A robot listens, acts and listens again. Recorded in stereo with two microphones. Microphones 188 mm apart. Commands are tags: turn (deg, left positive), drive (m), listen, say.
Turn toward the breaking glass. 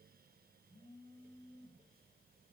<listen/>
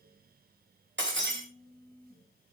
<turn deg="-90"/>
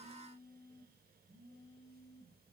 <say>Facing where the breaking glass came from. I can't hear it now.</say>